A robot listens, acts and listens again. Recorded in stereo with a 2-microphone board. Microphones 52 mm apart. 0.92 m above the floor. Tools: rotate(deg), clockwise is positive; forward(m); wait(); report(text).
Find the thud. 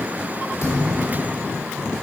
rotate(-60)
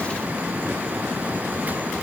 wait()
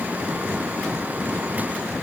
report("I heard a thud, but can't make it out now. It was about straight ahead or 60° left.")